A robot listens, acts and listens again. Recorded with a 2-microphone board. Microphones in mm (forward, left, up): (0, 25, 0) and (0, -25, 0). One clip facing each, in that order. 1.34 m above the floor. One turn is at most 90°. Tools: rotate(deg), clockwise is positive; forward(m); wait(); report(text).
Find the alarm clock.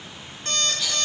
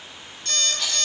rotate(-35)
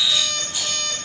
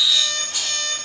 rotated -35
report("Found it: an alarm clock, straight ahead, 2 to 4 m away.")